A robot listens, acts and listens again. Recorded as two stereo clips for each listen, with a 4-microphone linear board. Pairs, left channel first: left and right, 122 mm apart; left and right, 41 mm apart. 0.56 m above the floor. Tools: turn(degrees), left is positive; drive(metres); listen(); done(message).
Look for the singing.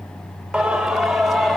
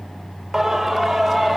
turn(degrees=30)
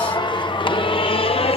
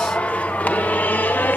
turn(degrees=130)
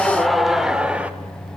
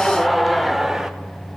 turn(degrees=-10)
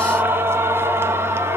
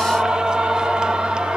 turn(degrees=-20)
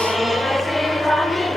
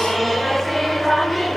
done("Found it: singing, straight ahead.")